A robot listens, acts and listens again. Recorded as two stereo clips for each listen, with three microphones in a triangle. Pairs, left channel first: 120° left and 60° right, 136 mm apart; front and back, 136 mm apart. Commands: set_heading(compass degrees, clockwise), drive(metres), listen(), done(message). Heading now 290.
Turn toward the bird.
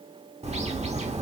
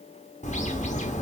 set_heading(315)
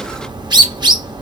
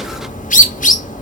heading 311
done("Found it: a bird, straight ahead.")